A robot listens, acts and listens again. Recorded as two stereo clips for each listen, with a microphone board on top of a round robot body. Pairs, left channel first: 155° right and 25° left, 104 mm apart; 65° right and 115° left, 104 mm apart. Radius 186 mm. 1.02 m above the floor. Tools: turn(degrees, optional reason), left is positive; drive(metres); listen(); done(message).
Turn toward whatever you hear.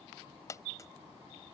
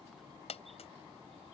turn(degrees=-95, reason="The dropped coin: 95° right.")
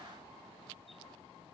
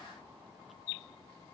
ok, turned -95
done("I heard a dropped coin from this way, but can't make it out now.")